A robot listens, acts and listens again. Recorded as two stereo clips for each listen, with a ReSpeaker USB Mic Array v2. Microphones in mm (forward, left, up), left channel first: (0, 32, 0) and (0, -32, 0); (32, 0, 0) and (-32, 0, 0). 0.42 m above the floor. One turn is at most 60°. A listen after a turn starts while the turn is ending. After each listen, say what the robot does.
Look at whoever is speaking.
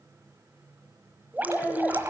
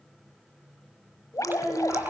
Turn 20° left.
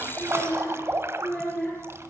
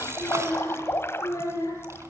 Facing the child speaking.